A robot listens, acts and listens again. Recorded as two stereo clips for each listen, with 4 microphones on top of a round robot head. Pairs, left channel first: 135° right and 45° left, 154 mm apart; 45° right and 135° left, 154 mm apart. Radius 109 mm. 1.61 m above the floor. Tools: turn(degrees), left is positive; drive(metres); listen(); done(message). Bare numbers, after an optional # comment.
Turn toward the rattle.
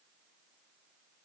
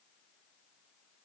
listen()
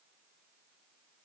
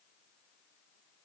listen()
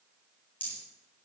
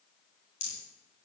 # The rattle: 55° right.
turn(-55)
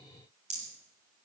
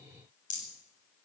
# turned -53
done("Found it: a rattle, straight ahead.")